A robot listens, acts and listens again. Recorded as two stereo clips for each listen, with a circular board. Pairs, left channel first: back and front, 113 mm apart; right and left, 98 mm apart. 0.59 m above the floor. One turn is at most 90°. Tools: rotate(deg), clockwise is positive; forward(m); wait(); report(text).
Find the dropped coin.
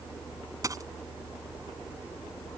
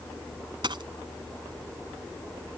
rotate(-55)
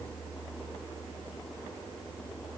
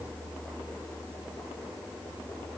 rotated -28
rotate(-30)
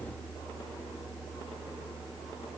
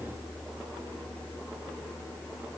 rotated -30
report("Facing where the dropped coin came from. I can't hear it now.")